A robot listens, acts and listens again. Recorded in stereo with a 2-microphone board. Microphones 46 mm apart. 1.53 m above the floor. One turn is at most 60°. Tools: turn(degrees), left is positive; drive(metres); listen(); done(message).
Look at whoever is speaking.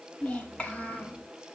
turn(degrees=30)
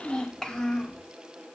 turn(degrees=20)
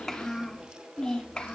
turn(degrees=25)
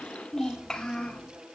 turn(degrees=15)
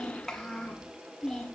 turn(degrees=10)
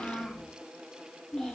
done("Found it: a child speaking, straight ahead, 2 to 4 m away.")